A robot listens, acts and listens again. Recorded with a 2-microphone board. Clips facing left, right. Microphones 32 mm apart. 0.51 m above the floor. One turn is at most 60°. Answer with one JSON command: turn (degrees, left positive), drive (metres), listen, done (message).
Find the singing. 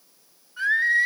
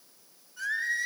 {"turn": 50}
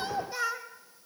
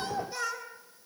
{"turn": 15}
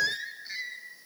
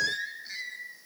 {"turn": 10}
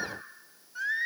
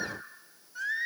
{"turn": 10}
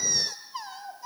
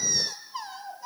{"done": "Facing the singing."}